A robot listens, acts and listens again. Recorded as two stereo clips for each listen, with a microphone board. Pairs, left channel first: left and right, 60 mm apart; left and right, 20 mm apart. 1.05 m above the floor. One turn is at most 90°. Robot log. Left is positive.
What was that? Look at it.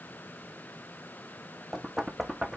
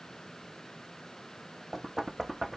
cmd yaw -30
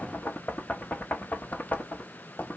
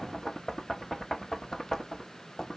note: So it is at 25° left.
cmd yaw +25
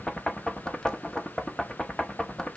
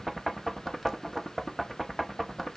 note: The knocking is now 15° left.
cmd yaw +15
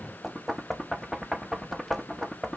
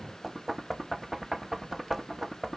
end: Found it: knocking, straight ahead.